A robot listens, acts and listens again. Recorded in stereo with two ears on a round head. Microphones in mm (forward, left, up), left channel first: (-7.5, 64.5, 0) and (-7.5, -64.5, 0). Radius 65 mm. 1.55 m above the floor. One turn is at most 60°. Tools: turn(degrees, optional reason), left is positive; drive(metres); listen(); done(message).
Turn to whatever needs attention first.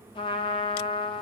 listen()
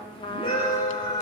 turn(degrees=35, reason="The scream: about 35° left or 145° left.")
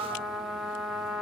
listen()
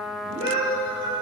turn(degrees=60, reason="So it is at 110° left.")
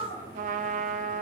turn(degrees=55, reason="The scream is now 55° left.")
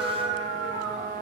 done("Found it: a scream, straight ahead, over 4 m away.")